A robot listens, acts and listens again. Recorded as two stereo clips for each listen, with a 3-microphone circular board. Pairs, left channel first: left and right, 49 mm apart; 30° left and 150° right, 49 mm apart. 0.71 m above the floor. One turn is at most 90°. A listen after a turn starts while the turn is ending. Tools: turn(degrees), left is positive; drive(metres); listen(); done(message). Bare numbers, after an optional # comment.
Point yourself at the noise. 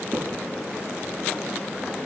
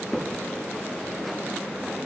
# The crack: 65° right.
turn(-65)
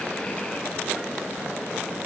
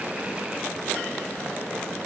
done("I heard a crack from this way, but can't make it out now.")